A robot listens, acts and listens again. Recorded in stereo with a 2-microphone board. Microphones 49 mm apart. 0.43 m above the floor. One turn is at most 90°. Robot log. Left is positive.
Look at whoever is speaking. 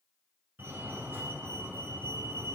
cmd idle
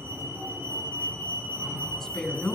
cmd yaw +30
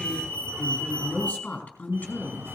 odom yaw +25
note: So it is at 150° left.
cmd yaw +90
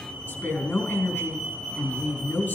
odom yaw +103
note: The woman speaking is now 45° left.
cmd yaw +45
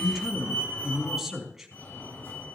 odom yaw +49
end: Facing the woman speaking, over 4 m away.